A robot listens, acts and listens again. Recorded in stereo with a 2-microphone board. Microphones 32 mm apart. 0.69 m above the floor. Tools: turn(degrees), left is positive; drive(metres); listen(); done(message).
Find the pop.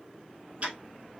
listen()
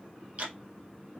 listen()
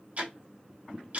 done("I can't make out a pop, only ticking.")